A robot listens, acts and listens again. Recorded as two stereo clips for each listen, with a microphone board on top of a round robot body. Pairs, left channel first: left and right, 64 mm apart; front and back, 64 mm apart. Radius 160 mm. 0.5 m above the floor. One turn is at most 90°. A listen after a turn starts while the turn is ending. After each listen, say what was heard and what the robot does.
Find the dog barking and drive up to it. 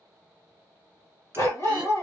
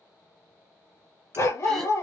The dog barking: 45° left. Turn 45° left.
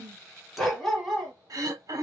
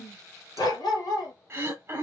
Drive 1.0 m forward.
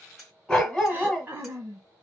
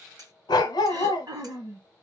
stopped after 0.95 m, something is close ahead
The dog barking is now 10° left. Turn 10° left.
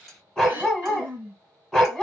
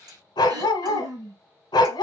Arrived at the dog barking, straight ahead.